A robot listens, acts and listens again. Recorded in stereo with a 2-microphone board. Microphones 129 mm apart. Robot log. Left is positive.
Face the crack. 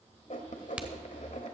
cmd yaw -30
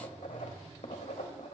cmd idle
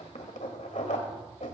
end: I heard a crack, but can't make it out now. It was about 20° left or 140° right.